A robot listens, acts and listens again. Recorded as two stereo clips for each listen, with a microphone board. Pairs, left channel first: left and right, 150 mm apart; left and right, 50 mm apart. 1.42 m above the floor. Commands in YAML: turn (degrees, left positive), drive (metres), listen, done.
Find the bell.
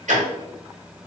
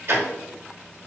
listen: true
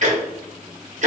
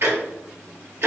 listen: true
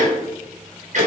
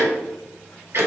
done: "I can't make out a bell to turn to."